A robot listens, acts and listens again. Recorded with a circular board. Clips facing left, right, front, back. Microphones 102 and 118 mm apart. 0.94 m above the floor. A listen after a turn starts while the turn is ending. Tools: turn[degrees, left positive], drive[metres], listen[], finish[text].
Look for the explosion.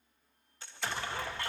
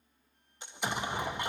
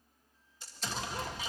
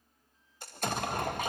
Thought: The explosion: 160° right.
Action: turn[-160]
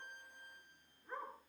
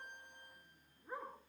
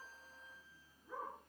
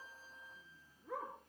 Action: finish[I heard an explosion from this way, but can't make it out now.]